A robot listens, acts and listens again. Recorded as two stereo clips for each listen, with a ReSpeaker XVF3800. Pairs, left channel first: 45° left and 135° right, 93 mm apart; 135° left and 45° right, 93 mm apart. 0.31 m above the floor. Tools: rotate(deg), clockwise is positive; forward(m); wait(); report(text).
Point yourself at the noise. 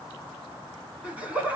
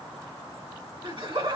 rotate(60)
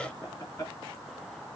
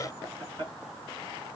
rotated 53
rotate(10)
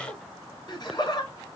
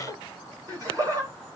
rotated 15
report("Facing the laughter.")